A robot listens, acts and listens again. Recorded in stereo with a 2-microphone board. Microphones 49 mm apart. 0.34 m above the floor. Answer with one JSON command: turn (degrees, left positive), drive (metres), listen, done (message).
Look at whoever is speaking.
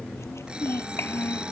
{"turn": 55}
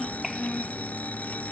{"done": "Facing the child speaking."}